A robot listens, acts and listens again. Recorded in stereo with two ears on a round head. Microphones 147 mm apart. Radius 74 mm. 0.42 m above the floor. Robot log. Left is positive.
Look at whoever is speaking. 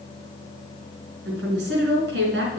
cmd yaw -90
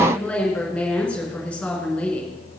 end: Found it: a woman speaking, straight ahead.